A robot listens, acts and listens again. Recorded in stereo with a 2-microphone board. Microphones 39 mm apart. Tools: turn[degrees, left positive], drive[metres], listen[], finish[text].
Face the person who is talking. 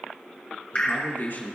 Thought: The man speaking: about 60° left or 120° left.
Action: turn[60]
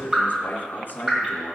Thought: So it is at 60° left.
Action: turn[60]
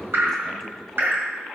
Action: listen[]
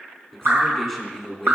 Action: finish[Facing the man speaking, 2 to 4 m away.]